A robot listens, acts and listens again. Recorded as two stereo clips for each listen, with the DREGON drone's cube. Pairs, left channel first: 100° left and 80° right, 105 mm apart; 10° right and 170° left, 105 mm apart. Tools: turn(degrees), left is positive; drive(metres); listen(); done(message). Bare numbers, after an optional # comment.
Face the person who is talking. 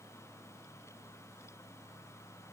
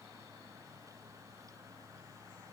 listen()
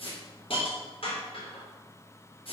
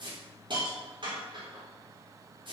listen()
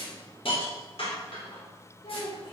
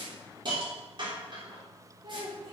# The child speaking: 135° left.
turn(135)
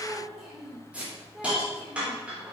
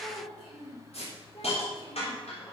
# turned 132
# The child speaking is now 10° left.
turn(10)
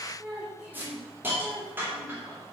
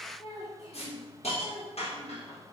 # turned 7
done("Facing the child speaking, 2 to 4 m away.")